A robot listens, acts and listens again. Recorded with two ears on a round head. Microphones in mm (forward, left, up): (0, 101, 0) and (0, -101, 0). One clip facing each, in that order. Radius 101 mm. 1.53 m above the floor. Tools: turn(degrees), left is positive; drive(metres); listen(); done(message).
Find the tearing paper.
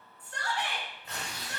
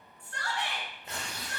turn(degrees=-35)
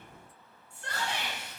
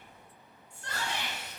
turn(degrees=-105)
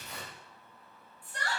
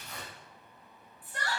turn(degrees=25)
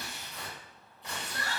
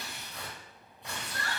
done("Facing the tearing paper, 1 to 2 m away.")